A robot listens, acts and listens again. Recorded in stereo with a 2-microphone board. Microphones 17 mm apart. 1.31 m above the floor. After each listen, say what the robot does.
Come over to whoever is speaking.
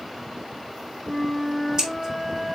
Keep listening.
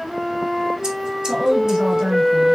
Turn 45° right.
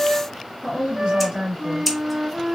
Turn 90° right.
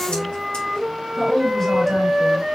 Drive 1.0 m forward.
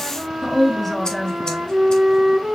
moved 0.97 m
Drive 1.0 m forward.
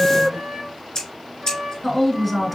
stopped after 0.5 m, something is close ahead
Arrived at the woman speaking, straight ahead.